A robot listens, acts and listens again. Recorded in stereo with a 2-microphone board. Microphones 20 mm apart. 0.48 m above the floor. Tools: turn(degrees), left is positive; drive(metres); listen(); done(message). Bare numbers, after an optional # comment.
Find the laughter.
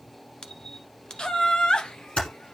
# The laughter: about 50° left or 130° left.
turn(50)
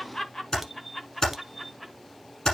# So it is at 15° left.
turn(15)
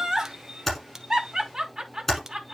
# The laughter is now 25° right.
turn(-25)
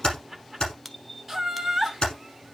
done("Found it: laughter, straight ahead.")